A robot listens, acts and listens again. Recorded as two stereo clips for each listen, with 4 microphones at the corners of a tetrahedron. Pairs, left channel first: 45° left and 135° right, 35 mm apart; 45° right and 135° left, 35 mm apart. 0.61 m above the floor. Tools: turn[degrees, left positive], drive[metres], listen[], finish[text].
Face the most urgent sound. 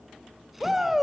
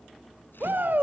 Thought: The shout: 140° left.
Action: turn[140]
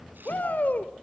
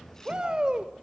Thought: The shout is now 70° left.
Action: turn[70]
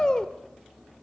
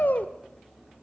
Thought: The shout is now 20° right.
Action: turn[-20]
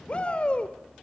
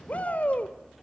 Action: finish[Facing the shout.]